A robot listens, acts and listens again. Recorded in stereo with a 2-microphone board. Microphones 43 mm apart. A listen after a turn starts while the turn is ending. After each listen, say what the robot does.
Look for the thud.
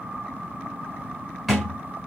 Turn 30° right.
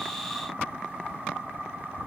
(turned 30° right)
Keep listening.
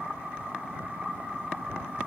I heard a thud, but can't make it out now. It was about 25° left or 145° right.